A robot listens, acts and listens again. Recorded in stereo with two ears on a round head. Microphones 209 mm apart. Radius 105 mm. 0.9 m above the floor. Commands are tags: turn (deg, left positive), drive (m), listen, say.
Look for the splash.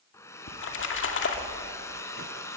<turn deg="55"/>
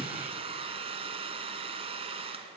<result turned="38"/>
<listen/>
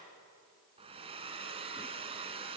<say>I heard a splash, but can't make it out now. It was about 15° left or 90° left.</say>